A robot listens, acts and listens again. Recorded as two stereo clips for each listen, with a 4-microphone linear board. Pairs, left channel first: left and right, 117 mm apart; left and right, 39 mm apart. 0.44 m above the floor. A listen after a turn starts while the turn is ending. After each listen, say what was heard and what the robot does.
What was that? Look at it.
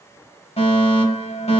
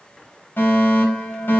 The fire alarm: about 60° left or 120° left. Turn 60° left.
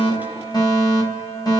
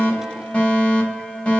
So it is at 40° left. Turn 40° left.
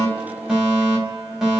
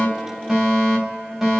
Facing the fire alarm.